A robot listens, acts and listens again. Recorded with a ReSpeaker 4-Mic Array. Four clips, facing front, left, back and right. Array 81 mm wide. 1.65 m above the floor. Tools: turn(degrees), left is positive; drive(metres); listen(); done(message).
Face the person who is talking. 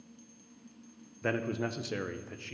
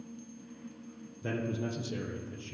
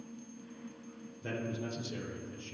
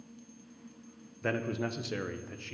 turn(degrees=-40)
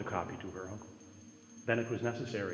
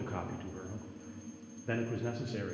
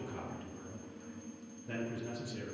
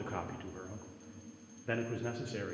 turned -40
turn(degrees=-10)
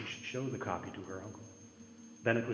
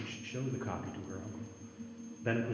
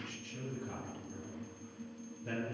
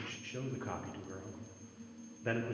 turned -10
done("Found it: a man speaking, straight ahead, 1 to 2 m away.")